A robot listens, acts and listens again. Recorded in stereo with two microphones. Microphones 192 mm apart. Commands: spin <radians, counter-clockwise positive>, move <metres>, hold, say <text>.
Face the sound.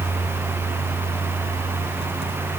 hold
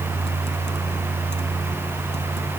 hold
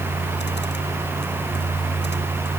say I can't make out anything to turn to.